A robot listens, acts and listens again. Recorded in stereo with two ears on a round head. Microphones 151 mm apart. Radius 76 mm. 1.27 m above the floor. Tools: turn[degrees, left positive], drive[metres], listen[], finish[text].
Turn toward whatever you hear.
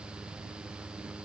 Action: listen[]
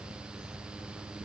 Action: listen[]
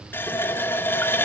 Action: turn[30]
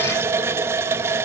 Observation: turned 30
Thought: So it is at 15° right.
Action: turn[-15]
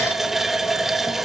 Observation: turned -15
Action: finish[Found it: a running tap, straight ahead, under 1 m away.]